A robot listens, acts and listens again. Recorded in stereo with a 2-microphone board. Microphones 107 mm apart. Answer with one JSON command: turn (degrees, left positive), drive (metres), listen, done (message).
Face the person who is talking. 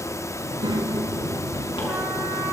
{"turn": -45}
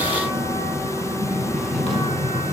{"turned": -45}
{"done": "Facing the child speaking, 2 to 4 m away."}